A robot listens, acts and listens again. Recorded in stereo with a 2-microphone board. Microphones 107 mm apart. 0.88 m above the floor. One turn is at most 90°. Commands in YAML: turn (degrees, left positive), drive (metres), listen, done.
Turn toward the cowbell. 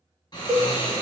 turn: -30
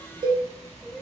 turn: -90
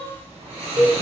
turn: -50
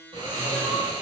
listen: true
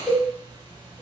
done: "Facing the cowbell, 1 to 2 m away."